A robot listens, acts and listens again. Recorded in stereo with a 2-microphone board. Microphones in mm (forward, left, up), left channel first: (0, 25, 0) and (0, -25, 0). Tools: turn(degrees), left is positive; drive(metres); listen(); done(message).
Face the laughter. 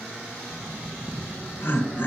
turn(degrees=50)
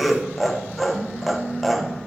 done("Facing the laughter, 1 to 2 m away.")